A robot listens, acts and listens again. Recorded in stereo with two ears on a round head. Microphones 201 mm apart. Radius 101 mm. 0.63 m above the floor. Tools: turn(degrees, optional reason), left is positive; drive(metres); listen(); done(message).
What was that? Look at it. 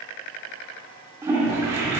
turn(degrees=-30)
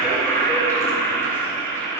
turn(degrees=15, reason="So it is at 15° left.")
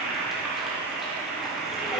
done("Found it: a toilet flushing, straight ahead.")